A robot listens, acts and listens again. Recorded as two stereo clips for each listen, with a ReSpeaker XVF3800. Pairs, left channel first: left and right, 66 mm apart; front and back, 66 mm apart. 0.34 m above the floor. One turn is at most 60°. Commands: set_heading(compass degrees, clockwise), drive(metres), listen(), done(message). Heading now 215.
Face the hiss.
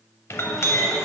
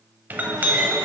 listen()
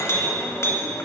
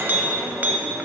listen()
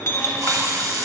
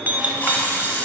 set_heading(275)
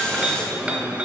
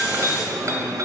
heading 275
listen()
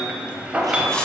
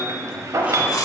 set_heading(260)
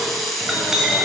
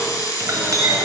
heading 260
done("Found it: a hiss, straight ahead.")